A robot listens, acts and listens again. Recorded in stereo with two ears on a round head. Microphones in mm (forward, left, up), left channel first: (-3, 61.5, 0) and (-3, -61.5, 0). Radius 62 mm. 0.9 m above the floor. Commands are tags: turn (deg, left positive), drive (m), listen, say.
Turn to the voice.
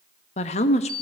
<turn deg="50"/>
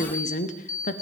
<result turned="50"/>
<turn deg="70"/>
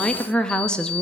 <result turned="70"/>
<say>Found it: a woman speaking, straight ahead, 1 to 2 m away.</say>